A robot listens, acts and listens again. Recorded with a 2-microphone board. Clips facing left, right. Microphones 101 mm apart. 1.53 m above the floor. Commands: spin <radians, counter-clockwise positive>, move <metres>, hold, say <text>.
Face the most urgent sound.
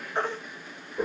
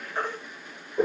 spin 0.52
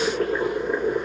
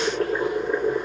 hold
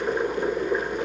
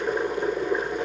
hold
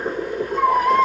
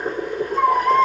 say Found it: a baby crying, straight ahead.